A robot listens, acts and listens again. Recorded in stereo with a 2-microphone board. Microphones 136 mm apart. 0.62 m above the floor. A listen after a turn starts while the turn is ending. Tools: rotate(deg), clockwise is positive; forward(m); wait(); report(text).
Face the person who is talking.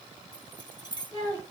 rotate(30)
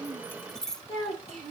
rotate(130)
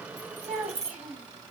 rotate(15)
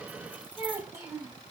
rotate(10)
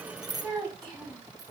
report("Facing the child speaking.")